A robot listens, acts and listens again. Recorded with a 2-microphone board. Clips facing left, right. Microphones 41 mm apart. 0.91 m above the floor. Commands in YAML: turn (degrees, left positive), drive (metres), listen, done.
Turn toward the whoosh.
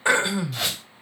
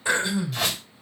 turn: 30
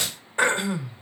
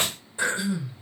turn: -30
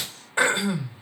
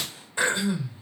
done: "Facing the whoosh, 2 to 4 m away."